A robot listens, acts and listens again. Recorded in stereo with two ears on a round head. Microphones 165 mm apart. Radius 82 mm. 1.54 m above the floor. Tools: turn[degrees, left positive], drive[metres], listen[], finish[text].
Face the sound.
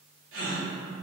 Action: turn[-90]
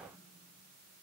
Action: finish[I heard a gasp from this way, but can't make it out now.]